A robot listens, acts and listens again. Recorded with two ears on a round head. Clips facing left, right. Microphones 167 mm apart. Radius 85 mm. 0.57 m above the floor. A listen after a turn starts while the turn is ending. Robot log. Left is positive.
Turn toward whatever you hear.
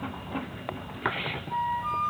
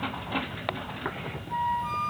cmd yaw -30
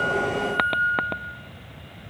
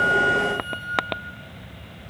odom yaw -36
note: So it is at 25° left.
cmd yaw +25
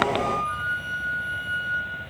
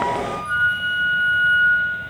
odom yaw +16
note: The flute is now 10° left.
cmd yaw +10
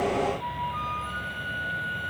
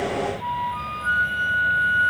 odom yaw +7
end: Facing the flute.